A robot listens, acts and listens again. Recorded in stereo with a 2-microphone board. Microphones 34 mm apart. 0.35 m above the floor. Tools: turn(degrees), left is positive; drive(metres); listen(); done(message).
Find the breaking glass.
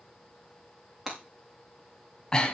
turn(degrees=-30)
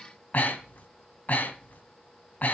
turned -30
listen()
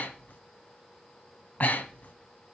done("I heard breaking glass, but can't make it out now. It was about 20° left or 140° right.")